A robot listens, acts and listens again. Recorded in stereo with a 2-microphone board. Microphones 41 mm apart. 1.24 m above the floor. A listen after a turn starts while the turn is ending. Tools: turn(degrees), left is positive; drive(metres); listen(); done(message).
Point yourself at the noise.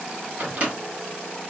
turn(degrees=-35)
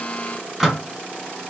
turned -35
done("Facing the microwave, 1 to 2 m away.")